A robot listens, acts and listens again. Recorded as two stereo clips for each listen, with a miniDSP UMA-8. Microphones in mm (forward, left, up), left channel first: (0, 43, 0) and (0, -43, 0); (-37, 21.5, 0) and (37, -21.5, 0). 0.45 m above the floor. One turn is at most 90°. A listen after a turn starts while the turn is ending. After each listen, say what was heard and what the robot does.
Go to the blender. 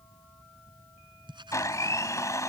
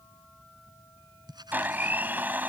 The blender: 40° left. Turn 40° left.
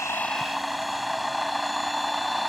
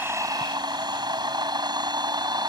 Drive 1.0 m forward.
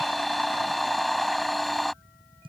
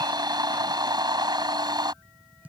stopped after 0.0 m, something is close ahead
Blocked. The blender is further on, straight ahead.